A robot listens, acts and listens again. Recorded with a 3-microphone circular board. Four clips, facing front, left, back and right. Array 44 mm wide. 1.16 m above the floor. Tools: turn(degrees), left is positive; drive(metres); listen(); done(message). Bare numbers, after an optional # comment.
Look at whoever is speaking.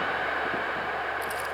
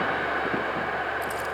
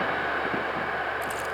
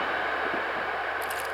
listen()
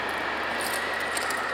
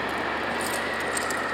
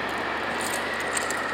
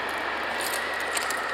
listen()
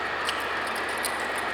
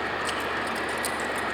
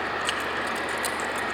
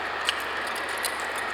done("I can't make out anyone speaking to turn to.")